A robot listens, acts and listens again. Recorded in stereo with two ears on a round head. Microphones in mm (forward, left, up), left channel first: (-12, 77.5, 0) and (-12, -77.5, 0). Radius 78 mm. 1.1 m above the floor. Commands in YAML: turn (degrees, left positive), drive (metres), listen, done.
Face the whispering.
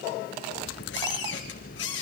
listen: true
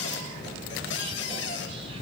turn: -30
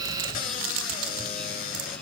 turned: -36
listen: true
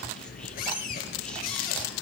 done: "Facing the whispering."